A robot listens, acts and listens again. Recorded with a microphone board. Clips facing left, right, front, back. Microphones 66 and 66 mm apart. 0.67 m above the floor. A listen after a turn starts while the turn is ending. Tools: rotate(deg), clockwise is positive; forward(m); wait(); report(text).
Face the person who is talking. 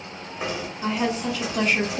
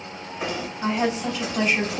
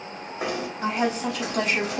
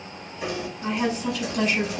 rotate(10)
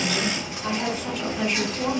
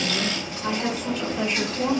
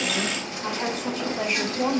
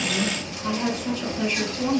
report("Facing the woman speaking.")